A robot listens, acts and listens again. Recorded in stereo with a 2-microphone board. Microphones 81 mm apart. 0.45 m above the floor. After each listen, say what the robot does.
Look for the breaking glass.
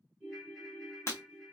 Turn 35° left.
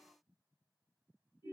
Keep listening.
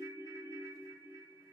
I heard breaking glass, but can't make it out now. It was about straight ahead or 110° left.